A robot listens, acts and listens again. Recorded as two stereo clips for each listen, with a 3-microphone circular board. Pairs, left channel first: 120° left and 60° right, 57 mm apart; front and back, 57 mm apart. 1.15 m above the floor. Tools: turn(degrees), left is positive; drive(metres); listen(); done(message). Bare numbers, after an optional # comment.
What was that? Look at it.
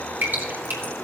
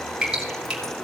# The dripping: 105° right.
turn(-105)
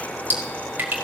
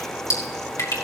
# The dripping is now 10° right.
turn(-10)
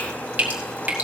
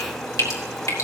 done("Facing the dripping, 1 to 2 m away.")